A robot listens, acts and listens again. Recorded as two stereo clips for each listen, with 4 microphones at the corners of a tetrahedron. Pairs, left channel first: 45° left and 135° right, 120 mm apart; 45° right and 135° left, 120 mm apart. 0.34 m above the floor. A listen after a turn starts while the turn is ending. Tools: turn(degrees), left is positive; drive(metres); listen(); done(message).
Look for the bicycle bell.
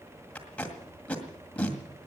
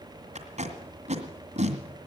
listen()
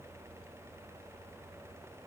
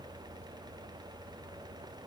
listen()
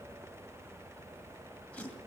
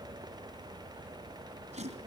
done("I can't make out a bicycle bell, only tape being pulled.")